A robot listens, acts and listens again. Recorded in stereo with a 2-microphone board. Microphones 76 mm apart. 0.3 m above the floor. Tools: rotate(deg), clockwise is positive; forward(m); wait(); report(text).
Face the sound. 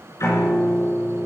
rotate(-45)
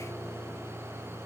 report("Facing the piano, 2 to 4 m away.")